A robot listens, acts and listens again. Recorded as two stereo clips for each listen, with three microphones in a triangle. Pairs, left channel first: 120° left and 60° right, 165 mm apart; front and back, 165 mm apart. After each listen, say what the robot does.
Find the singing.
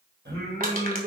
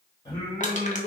Turn 60° right.
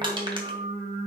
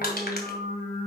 Turn 20° right.
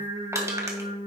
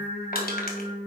Facing the singing, over 4 m away.